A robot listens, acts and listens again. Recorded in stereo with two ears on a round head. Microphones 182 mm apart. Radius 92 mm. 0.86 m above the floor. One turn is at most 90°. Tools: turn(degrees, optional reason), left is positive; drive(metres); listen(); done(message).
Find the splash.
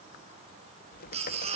listen()
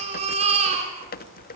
listen()
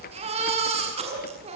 done("I can't make out a splash to turn to.")